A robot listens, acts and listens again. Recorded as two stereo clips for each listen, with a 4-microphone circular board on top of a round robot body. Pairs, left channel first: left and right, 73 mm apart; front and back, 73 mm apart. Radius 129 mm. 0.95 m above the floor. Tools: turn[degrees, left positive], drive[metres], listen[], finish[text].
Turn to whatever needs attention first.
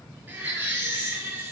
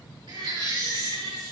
Thought: The baby crying: 160° right.
Action: turn[-160]
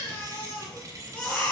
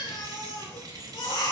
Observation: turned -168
Thought: The baby crying is now 10° left.
Action: turn[10]
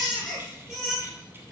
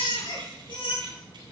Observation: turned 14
Action: finish[Found it: a baby crying, straight ahead, over 4 m away.]